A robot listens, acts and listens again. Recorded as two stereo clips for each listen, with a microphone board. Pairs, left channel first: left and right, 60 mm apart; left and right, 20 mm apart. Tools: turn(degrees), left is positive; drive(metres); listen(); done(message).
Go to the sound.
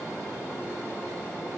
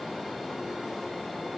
listen()
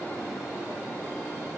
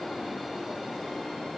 listen()
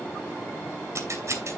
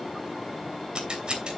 turn(degrees=-55)
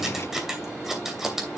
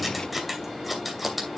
drive(metres=1.0)
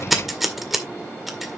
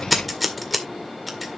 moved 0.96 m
drive(metres=1.0)
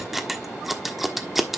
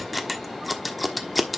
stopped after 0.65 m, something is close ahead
done("I am next to the scissors.")